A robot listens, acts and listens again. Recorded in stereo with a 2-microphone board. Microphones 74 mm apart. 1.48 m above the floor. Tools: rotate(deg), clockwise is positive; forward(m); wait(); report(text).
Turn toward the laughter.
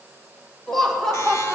rotate(-30)
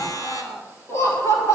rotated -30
rotate(-135)
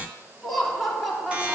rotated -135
report("Facing the laughter.")